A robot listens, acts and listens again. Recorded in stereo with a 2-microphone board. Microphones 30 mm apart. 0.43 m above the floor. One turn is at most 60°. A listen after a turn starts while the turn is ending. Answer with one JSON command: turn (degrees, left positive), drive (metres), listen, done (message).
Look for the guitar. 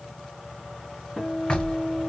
{"turn": -30}
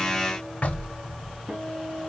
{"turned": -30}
{"turn": -60}
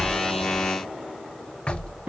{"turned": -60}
{"turn": -60}
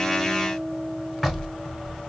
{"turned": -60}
{"turn": -25}
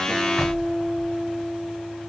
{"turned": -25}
{"done": "Facing the guitar."}